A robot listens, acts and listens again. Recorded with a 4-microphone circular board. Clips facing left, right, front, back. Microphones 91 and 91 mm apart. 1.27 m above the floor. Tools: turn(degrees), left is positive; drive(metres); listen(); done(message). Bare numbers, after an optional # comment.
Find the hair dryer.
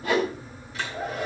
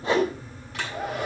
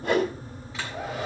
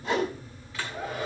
# The hair dryer: 70° right.
turn(-70)
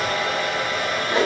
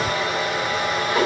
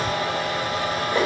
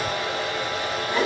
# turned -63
# The hair dryer is now 10° right.
turn(-10)
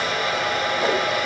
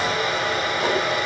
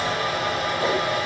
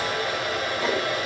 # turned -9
done("Facing the hair dryer, over 4 m away.")